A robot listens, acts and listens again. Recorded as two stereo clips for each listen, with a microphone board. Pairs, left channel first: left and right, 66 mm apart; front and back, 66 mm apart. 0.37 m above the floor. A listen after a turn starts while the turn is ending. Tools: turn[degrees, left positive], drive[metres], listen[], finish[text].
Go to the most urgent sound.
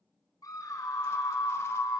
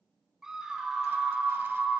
Thought: The scream: 100° left.
Action: turn[100]
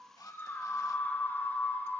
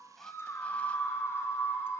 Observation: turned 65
Thought: The scream is now 35° left.
Action: turn[35]
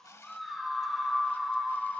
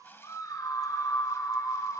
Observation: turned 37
Action: drive[1.0]
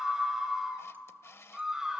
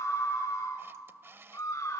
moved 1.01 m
Thought: The scream is now 10° right.
Action: turn[-10]
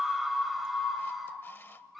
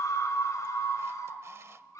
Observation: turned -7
Action: drive[1.0]
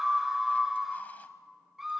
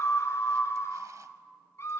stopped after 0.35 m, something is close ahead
Action: finish[Arrived at the scream, straight ahead.]